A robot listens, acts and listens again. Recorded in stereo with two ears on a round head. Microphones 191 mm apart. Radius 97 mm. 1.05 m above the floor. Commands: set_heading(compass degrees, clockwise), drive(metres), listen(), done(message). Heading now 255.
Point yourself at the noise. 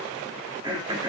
set_heading(275)
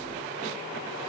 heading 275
listen()
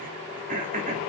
set_heading(55)
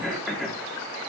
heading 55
done("Found it: throat clearing, straight ahead, 2 to 4 m away.")